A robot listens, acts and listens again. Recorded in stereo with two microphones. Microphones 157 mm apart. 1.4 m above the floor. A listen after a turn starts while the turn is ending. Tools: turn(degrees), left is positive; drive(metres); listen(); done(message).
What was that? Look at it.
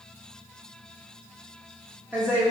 turn(degrees=-30)
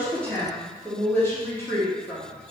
turn(degrees=15)
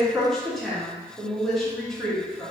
done("Facing the woman speaking, 1 to 2 m away.")